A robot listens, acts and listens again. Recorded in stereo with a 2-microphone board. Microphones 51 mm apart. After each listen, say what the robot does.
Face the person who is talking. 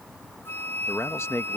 Turn 60° left.
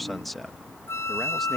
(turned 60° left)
Found it: a man speaking, straight ahead.